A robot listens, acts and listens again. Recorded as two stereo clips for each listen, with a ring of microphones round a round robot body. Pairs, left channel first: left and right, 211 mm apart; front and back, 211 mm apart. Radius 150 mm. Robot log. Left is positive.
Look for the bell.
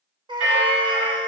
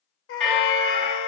note: The bell: 85° right.
cmd yaw -85
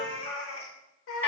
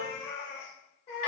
end: Found it: a bell, straight ahead, 1 to 2 m away.